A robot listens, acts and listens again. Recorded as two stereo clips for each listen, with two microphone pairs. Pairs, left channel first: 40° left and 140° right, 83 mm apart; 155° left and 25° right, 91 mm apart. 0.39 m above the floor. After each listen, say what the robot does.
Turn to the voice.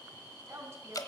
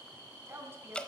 Turn 85° right.
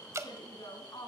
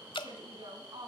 Found it: a woman speaking, straight ahead.